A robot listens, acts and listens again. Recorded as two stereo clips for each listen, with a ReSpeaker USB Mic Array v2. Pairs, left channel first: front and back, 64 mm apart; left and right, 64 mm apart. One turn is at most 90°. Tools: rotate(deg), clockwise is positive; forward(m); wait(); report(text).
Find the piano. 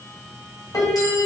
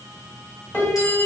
rotate(-30)
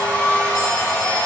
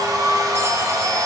wait()
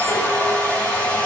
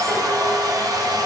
wait()
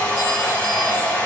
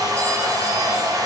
report("I heard a piano from this way, but can't make it out now.")